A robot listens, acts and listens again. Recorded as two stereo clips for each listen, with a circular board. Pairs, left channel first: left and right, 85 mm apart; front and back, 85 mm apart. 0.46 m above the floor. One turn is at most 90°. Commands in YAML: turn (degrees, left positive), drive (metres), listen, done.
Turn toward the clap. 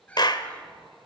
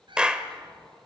turn: 90
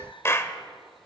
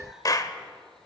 turn: 35
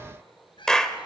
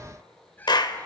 turn: 10
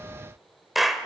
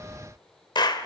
done: "Found it: a clap, straight ahead, 1 to 2 m away."